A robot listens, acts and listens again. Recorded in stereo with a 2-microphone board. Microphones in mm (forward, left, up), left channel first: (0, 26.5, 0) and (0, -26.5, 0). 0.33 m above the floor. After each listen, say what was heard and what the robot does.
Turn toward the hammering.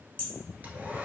The hammering: about 30° left or 150° left. Turn 30° left.
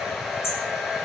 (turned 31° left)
So it is at 120° left. Turn 120° left.
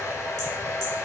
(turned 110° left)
Nothing new. It was at 10° left. Turn 10° left.
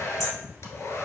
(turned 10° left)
Keep listening.
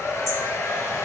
Facing where the hammering came from. I can't hear it now.